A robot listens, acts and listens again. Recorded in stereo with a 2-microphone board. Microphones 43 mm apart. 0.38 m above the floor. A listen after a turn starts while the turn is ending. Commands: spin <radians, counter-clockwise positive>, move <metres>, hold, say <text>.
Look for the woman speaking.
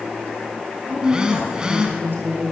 spin -0.96
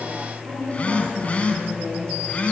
hold
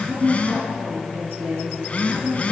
spin -1.40
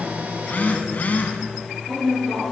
spin 0.17
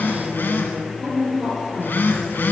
say Facing the woman speaking.